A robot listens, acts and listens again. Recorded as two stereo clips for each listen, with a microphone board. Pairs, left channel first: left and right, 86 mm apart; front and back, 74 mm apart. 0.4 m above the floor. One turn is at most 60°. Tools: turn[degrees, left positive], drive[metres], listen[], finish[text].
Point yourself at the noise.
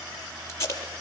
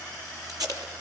Thought: The tape being pulled: 145° left.
Action: turn[60]
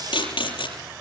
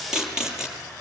Thought: The tape being pulled is now 100° left.
Action: turn[60]
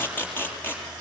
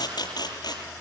Thought: The tape being pulled is now 25° left.
Action: turn[25]
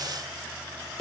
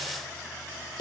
Action: finish[Found it: tape being pulled, straight ahead.]